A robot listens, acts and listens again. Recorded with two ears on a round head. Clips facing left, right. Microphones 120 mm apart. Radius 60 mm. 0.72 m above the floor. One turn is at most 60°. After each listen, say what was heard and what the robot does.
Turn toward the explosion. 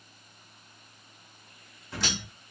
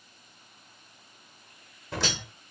The explosion: about 55° right or 125° right. Turn 55° right.
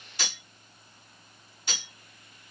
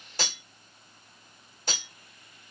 Keep listening.
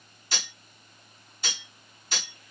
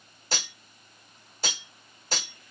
I heard an explosion, but can't make it out now. It was about straight ahead or 70° right.